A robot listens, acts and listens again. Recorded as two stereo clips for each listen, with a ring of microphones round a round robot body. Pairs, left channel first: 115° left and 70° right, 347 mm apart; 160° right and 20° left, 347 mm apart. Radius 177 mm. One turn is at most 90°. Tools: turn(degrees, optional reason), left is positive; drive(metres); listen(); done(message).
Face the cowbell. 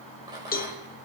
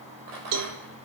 turn(degrees=50, reason="The cowbell: 50° left.")
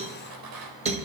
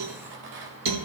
done("Found it: a cowbell, straight ahead, 1 to 2 m away.")